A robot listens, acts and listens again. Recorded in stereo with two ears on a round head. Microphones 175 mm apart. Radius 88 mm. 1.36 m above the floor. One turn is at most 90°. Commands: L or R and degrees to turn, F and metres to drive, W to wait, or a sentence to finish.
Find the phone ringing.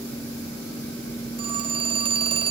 R30
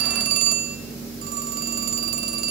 R90
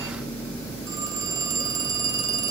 R20
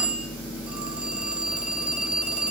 Found it: a phone ringing, straight ahead, 1 to 2 m away.